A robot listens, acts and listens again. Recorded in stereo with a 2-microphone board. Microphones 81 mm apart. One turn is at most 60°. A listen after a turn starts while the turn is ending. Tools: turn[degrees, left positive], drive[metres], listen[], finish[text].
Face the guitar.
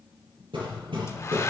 Action: listen[]
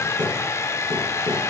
Action: listen[]
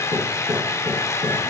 Action: finish[I can't make out a guitar to turn to.]